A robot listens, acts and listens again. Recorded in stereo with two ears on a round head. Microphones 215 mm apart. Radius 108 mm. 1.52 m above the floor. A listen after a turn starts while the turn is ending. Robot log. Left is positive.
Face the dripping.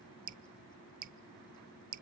note: The dripping: about 35° right or 145° right.
cmd yaw -35
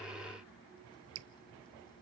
note: So it is at 105° right.
cmd yaw -105
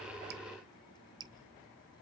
note: The dripping is now 20° right.
cmd yaw -20
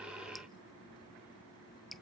end: Facing the dripping.